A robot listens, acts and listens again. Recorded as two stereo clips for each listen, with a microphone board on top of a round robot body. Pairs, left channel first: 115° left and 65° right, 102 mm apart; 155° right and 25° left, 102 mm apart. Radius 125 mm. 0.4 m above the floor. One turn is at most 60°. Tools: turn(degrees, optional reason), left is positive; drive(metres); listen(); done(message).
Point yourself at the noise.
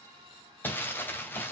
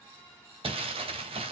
turn(degrees=40, reason="The crumpling: 40° left.")
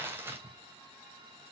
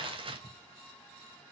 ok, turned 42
done("Facing the crumpling.")